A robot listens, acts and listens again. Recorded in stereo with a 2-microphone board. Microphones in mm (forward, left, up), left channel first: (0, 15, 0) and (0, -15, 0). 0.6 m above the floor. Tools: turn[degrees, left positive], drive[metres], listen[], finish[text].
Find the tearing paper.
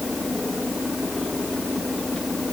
Action: listen[]
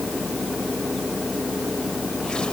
Action: listen[]
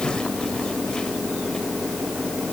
Action: finish[I can't make out tearing paper to turn to.]